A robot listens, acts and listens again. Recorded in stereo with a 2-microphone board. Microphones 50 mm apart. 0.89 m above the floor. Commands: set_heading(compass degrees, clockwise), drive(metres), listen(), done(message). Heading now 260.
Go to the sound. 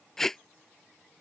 set_heading(230)
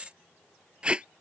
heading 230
set_heading(250)
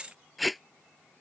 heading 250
drive(1.0)
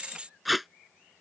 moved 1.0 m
drive(1.0)
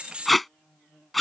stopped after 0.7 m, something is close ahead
done("I am next to the tape being pulled.")